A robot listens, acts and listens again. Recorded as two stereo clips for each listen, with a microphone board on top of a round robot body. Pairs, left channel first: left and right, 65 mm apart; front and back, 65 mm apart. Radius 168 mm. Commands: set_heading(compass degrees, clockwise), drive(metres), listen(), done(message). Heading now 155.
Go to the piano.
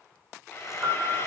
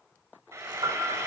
set_heading(310)
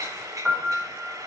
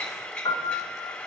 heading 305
drive(1.0)
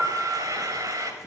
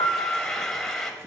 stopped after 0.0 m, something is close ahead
set_heading(315)
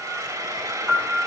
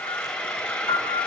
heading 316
done("Blocked. The piano is further on, straight ahead.")